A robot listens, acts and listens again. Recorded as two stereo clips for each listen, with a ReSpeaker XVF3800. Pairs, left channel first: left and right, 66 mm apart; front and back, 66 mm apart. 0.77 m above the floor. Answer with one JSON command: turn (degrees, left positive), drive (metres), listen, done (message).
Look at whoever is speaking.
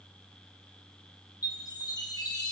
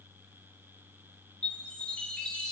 {"listen": true}
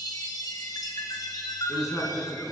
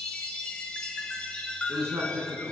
{"turn": 135}
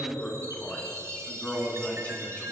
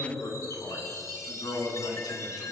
{"turn": 20}
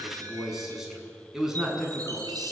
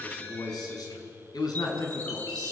{"done": "Found it: a man speaking, straight ahead, over 4 m away."}